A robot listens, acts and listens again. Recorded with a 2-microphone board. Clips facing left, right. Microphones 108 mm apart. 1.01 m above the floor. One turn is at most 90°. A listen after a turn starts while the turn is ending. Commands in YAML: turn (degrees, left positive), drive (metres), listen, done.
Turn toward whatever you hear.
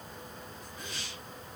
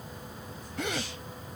turn: -90
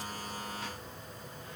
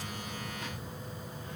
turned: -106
turn: 15
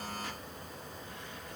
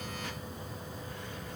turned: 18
done: "Facing where the gasp came from. I can't hear it now."